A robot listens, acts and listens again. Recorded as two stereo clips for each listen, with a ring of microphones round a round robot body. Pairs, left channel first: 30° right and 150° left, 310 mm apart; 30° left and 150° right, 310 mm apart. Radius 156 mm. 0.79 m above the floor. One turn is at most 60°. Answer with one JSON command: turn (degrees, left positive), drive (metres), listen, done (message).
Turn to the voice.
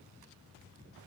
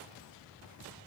{"listen": true}
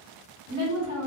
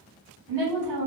{"turn": -60}
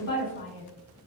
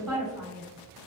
{"turn": -60}
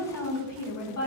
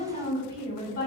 {"turn": -30}
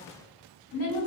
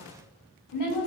{"turn": 10}
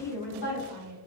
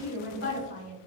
{"done": "Facing the woman speaking."}